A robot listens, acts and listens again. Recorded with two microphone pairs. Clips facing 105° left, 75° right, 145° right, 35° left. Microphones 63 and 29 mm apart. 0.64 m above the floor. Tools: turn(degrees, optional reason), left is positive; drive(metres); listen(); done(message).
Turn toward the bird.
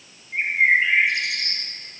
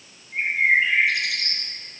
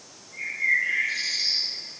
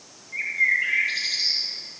turn(degrees=40, reason="The bird: 40° left.")
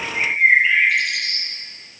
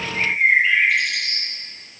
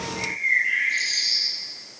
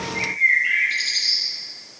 turn(degrees=15, reason="The bird is now 15° left.")
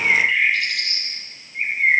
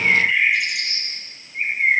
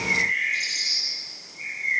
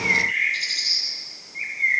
done("Facing the bird, 1 to 2 m away.")